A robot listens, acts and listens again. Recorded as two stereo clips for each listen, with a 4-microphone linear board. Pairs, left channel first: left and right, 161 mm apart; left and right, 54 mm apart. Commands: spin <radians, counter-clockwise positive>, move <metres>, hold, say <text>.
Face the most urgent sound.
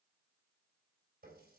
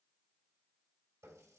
hold
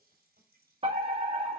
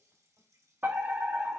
spin -0.70
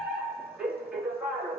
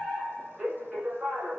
say Found it: a fire alarm, straight ahead, 2 to 4 m away.